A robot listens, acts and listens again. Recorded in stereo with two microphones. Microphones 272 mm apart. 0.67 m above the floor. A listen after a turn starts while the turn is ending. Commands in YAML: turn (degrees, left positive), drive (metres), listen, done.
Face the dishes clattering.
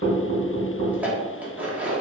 turn: -30
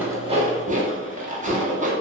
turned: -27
turn: -150
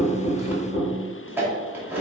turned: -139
turn: -10
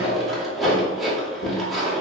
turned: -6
done: "Facing the dishes clattering, under 1 m away."